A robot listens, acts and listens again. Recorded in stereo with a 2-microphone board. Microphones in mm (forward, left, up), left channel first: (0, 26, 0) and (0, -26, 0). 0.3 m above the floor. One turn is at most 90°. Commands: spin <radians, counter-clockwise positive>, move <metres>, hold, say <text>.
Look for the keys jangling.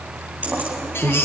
spin -0.52
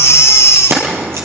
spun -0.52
spin -1.57
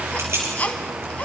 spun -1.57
spin -0.52
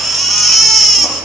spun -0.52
hold
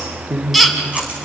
spin -0.52
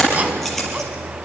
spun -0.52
say Facing the keys jangling, over 4 m away.